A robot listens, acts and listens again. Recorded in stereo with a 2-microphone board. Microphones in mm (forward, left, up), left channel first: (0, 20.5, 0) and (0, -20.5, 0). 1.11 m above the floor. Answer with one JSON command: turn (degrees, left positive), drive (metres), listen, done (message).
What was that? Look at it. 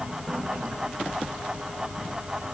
{"listen": true}
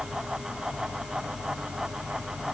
{"listen": true}
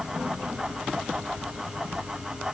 {"done": "I can't make out anything to turn to."}